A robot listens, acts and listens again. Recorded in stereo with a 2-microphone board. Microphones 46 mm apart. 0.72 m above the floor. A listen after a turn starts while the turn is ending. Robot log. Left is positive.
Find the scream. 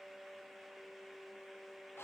cmd idle
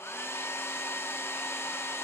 cmd idle
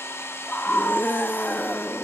note: The scream: about 45° left or 135° left.
cmd yaw +45
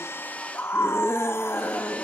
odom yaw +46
note: So it is at 80° left.
cmd yaw +80
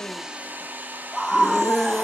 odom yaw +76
end: Found it: a scream, straight ahead, 1 to 2 m away.